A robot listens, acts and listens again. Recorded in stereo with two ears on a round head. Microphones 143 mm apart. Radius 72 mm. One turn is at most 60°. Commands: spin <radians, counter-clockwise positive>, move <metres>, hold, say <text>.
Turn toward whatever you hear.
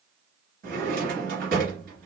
spin -1.05
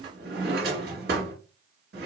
spin -1.05
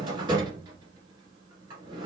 spin -0.44
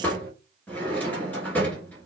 spin 0.17
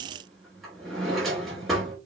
say Facing the drawer, 1 to 2 m away.